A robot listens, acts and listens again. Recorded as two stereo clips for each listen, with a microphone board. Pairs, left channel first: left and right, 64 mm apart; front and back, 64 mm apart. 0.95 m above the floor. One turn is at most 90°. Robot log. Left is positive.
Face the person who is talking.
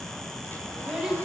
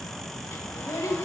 note: The child speaking: 10° right.
cmd yaw -10
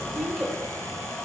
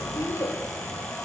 end: Facing the child speaking.